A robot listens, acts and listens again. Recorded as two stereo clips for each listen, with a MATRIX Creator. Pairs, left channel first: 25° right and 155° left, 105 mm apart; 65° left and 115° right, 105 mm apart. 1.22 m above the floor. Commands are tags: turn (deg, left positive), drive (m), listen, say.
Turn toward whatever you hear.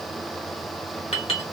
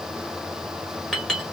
<turn deg="-15"/>
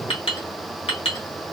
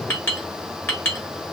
<say>Facing the clink, 1 to 2 m away.</say>